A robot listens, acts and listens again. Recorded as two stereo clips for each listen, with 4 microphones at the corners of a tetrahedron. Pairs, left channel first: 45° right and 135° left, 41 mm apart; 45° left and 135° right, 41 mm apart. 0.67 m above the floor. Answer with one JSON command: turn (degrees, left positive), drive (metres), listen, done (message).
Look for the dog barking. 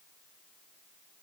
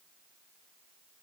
{"listen": true}
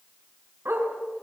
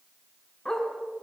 {"turn": 125}
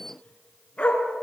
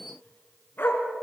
{"turn": 15}
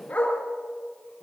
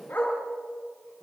{"done": "Found it: a dog barking, straight ahead."}